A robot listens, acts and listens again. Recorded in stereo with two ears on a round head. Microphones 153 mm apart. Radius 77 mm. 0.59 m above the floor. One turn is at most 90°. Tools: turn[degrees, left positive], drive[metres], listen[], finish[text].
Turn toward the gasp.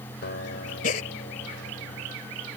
Thought: The gasp: about 50° left or 130° left.
Action: turn[50]
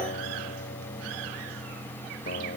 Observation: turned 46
Action: listen[]
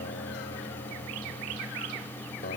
Action: finish[I heard a gasp, but can't make it out now. It was about 5° left or 85° left.]